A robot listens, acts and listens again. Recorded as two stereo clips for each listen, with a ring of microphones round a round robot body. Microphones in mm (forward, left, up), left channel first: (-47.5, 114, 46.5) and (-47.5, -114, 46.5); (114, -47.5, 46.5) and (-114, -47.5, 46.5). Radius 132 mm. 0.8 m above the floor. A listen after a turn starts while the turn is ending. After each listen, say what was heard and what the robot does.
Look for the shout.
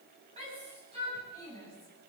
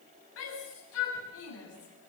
The shout: 25° right. Turn 25° right.
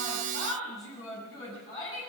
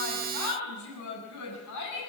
The shout is now 15° left. Turn 15° left.
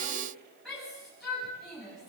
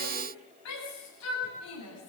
Facing the shout, over 4 m away.